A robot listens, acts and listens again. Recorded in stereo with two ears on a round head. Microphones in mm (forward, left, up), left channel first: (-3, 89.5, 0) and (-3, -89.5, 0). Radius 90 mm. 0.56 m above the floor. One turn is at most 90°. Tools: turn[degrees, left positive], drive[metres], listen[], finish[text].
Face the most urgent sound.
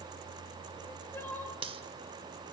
Action: turn[30]
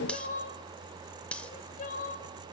Thought: So it is at 135° left.
Action: turn[90]
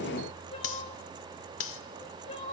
Thought: The crying is now 35° left.
Action: turn[35]
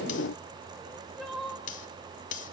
Action: finish[Found it: crying, straight ahead, 2 to 4 m away.]